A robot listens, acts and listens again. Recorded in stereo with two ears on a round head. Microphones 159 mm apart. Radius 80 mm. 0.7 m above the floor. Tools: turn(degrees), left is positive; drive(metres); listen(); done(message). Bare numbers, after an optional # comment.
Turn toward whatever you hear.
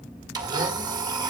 # The blender: about 25° right or 155° right.
turn(-25)
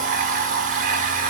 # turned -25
# So it is at 130° right.
turn(-130)
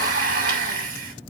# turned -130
# The blender is now 50° right.
turn(-50)
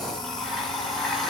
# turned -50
done("Facing the blender.")